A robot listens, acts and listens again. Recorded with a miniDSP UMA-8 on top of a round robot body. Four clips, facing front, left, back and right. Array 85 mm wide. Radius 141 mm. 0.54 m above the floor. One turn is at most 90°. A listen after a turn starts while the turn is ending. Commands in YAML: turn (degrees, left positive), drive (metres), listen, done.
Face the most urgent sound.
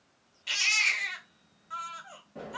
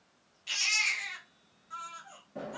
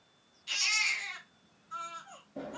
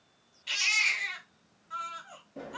turn: -10
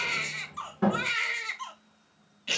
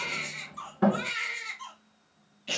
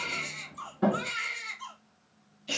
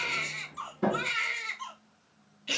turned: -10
done: "Facing the baby crying, 1 to 2 m away."